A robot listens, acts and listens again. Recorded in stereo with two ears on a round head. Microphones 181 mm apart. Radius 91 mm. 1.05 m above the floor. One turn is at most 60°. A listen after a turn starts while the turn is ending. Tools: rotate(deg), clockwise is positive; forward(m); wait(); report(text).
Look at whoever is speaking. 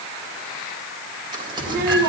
rotate(50)
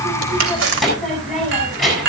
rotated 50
report("Facing the child speaking, over 4 m away.")